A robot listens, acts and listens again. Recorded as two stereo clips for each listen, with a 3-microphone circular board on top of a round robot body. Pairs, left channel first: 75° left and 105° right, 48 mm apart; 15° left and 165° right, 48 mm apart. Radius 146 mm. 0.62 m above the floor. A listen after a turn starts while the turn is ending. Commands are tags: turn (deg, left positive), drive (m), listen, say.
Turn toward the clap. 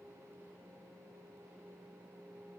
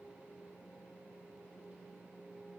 <listen/>
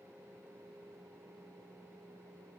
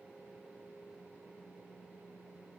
<listen/>
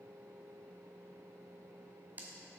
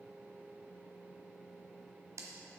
<turn deg="-160"/>
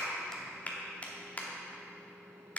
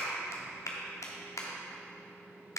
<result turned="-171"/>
<turn deg="15"/>
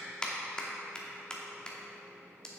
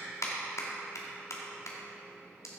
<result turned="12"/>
<say>Found it: a clap, straight ahead, 1 to 2 m away.</say>